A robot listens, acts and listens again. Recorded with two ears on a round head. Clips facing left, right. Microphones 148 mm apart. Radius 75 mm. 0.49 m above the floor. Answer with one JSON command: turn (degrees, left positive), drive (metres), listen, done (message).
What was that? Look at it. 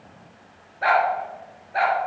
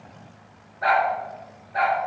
{"turn": 35}
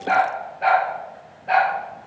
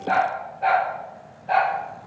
{"turn": 105}
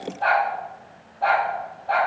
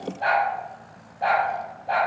{"turn": -20}
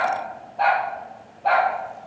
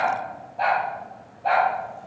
{"done": "Facing the dog barking, 2 to 4 m away."}